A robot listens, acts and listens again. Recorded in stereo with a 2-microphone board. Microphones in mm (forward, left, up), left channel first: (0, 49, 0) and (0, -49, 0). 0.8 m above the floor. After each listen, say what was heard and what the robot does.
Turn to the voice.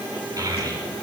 The child speaking: about 40° right or 140° right. Turn 40° right.
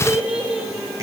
So it is at 10° right. Turn 10° right.
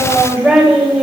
Found it: a child speaking, straight ahead, 2 to 4 m away.